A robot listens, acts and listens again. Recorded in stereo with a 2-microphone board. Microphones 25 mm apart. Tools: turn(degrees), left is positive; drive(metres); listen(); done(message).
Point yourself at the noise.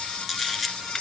turn(degrees=30)
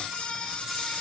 listen()
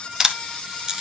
turn(degrees=-30)
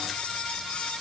listen()
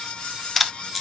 done("Found it: a camera shutter, straight ahead.")